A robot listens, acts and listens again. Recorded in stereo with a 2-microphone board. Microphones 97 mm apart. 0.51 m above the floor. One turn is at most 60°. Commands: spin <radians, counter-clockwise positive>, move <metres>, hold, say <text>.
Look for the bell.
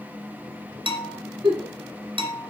spin -1.05
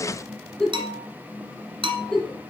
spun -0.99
spin -1.05
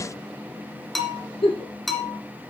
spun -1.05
say Found it: a bell, straight ahead, 1 to 2 m away.